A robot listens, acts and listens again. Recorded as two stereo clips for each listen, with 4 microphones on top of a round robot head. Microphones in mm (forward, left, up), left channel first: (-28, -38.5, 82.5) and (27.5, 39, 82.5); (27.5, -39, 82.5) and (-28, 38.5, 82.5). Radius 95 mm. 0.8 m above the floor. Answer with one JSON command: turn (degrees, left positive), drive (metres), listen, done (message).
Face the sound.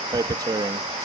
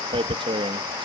{"turn": 100}
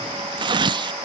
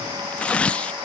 {"turn": 25}
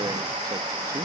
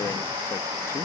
{"listen": true}
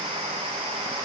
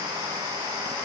{"listen": true}
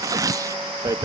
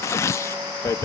{"done": "Found it: tearing paper, straight ahead."}